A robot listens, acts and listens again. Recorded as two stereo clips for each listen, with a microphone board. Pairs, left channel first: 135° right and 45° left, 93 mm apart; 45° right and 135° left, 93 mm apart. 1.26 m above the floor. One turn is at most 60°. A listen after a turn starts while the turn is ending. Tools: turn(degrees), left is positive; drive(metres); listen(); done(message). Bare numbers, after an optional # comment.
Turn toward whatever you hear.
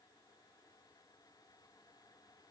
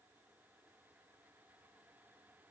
listen()
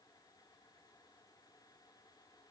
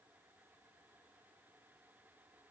listen()
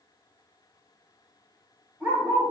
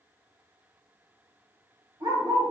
# The dog barking: 115° left.
turn(60)
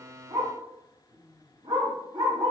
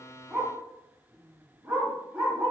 # The dog barking is now 65° left.
turn(60)
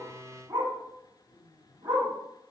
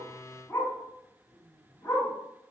done("Found it: a dog barking, straight ahead.")